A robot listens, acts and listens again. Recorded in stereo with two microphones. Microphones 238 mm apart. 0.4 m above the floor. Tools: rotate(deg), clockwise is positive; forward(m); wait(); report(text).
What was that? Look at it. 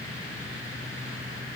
wait()
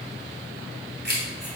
rotate(45)
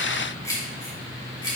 rotate(-20)
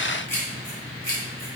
rotate(-15)
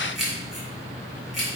report("Facing the keys jangling, 2 to 4 m away.")